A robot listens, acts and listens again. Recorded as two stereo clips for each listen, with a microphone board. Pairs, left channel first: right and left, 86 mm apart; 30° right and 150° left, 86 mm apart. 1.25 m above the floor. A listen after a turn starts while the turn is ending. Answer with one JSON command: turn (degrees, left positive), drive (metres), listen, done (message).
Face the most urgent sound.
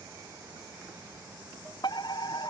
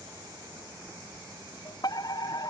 {"turn": -65}
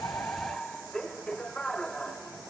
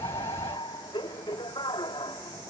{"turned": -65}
{"turn": -10}
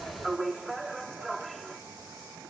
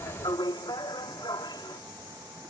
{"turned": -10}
{"done": "Found it: a fire alarm, straight ahead."}